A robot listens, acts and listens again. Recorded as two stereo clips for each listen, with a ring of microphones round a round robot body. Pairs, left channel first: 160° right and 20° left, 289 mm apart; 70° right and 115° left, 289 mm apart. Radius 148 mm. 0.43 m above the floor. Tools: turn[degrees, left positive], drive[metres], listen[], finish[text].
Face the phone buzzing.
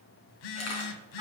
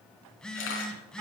Thought: The phone buzzing: 155° right.
Action: turn[-155]
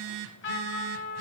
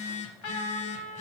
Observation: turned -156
Action: finish[Found it: a phone buzzing, straight ahead, under 1 m away.]